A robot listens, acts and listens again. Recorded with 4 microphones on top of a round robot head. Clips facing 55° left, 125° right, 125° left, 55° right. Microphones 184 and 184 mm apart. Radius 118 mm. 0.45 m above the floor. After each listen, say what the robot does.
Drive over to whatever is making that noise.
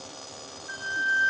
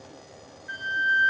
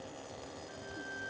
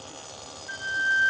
Turn 60° right.
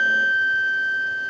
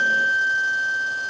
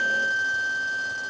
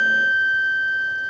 Turn 15° right.
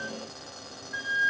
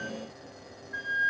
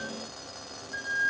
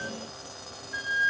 Drive 1.0 m forward.
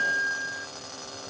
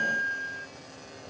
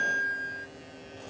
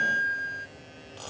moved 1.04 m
Drive 1.0 m forward.
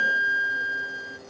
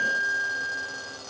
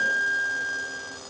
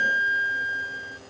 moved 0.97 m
Turn 15° left.
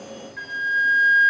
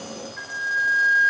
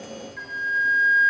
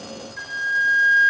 Drive 1.0 m forward.
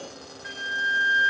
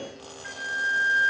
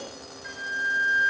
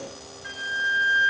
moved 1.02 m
Drive 1.0 m forward.
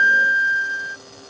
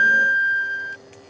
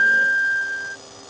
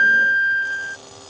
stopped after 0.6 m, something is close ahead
I am next to the flute.